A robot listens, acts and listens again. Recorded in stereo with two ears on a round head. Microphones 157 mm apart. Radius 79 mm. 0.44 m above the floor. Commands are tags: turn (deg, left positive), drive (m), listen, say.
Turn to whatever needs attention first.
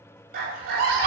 <turn deg="-55"/>
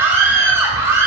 <turn deg="-20"/>
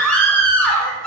<say>Found it: a scream, straight ahead, 1 to 2 m away.</say>